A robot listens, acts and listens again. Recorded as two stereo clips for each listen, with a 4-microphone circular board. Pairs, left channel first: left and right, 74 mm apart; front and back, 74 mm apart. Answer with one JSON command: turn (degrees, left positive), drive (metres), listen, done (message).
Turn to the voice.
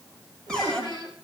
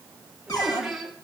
{"turn": 90}
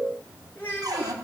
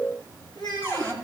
{"turn": 25}
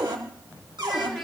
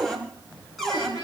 {"done": "Facing the child speaking, 2 to 4 m away."}